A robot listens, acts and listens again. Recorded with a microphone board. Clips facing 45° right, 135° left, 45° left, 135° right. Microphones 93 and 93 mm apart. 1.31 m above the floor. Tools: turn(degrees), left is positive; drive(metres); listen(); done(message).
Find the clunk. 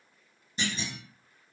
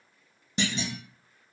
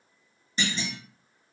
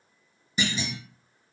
turn(degrees=145)
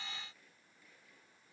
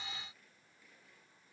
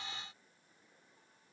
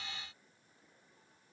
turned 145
done("I heard a clunk from this way, but can't make it out now.")